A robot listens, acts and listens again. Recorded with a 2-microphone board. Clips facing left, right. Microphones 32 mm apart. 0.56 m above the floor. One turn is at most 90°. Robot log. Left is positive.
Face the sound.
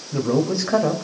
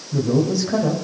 note: The man speaking: about 35° left or 145° left.
cmd yaw +35
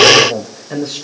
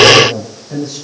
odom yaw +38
note: So it is at 125° left.
cmd yaw +90
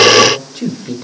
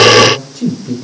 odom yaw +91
note: The man speaking is now 40° left.
cmd yaw +40
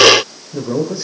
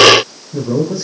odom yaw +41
note: The man speaking is now 20° left.
cmd yaw +20
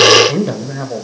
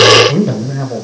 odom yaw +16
note: The man speaking is now 15° left.
cmd yaw +15
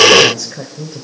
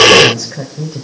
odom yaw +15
end: Found it: a man speaking, straight ahead.